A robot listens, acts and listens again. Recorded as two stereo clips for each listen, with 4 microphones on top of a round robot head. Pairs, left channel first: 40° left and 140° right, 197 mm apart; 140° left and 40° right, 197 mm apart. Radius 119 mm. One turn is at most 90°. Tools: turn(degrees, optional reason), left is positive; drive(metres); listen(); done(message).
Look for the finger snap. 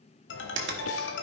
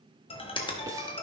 turn(degrees=-90, reason="The finger snap: 155° right.")
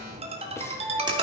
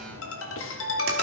turn(degrees=-65, reason="Nothing new. It was at 65° right.")
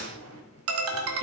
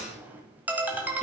listen()
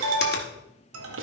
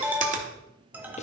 done("I heard a finger snap from this way, but can't make it out now.")